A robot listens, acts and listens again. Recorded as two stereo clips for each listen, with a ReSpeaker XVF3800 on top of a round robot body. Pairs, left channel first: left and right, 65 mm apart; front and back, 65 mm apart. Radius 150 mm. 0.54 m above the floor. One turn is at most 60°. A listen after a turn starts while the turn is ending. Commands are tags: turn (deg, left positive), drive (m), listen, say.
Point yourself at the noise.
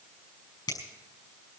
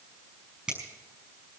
<turn deg="60"/>
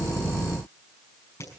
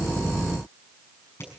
<turn deg="50"/>
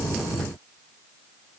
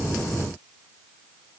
<listen/>
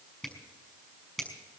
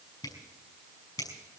<say>Found it: a finger snap, straight ahead.</say>